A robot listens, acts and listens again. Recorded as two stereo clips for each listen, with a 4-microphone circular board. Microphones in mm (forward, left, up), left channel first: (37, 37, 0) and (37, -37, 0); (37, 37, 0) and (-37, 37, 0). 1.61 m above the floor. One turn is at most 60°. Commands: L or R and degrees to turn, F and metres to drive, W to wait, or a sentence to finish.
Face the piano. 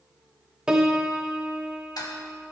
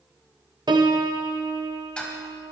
R60
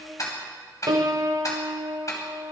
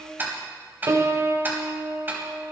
R60
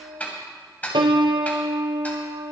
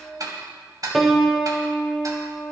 R60
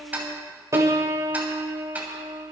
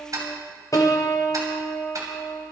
R40
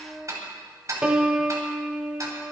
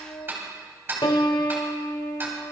R10
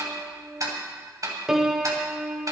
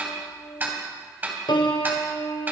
Found it: a piano, straight ahead, 1 to 2 m away.